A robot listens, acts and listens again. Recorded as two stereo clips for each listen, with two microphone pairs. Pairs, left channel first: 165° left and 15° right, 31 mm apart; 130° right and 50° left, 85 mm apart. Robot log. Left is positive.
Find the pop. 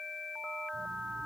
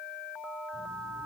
cmd idle
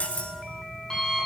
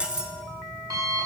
cmd idle
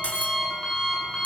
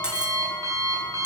end: I can't make out a pop to turn to.